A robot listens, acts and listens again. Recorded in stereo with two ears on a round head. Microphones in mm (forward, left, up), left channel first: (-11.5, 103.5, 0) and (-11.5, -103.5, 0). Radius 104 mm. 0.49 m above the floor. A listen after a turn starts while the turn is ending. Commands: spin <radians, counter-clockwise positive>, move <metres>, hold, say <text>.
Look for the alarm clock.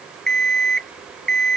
spin 0.52
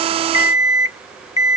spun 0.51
spin 2.53
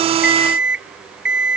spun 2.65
say Facing the alarm clock.